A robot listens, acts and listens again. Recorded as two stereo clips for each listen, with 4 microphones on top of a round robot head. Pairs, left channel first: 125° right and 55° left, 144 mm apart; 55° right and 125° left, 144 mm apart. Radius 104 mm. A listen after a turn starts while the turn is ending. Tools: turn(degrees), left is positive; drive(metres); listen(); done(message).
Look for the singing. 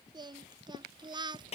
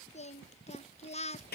done("Found it: singing, straight ahead.")